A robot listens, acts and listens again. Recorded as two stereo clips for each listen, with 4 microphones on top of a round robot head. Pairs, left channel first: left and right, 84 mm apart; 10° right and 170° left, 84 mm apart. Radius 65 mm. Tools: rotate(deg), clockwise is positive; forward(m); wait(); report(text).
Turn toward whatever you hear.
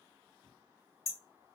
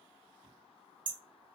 rotate(-140)
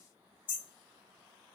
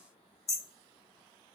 rotate(-45)
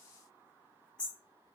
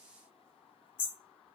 rotate(-10)
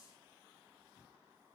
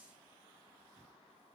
wait()
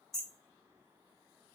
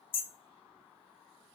report("Facing the hammering.")